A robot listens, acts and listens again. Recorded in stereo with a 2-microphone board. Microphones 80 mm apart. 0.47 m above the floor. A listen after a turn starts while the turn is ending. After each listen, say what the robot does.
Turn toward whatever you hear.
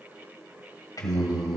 Turn 50° left.
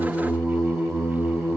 Turn 10° left.
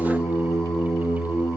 Found it: singing, straight ahead.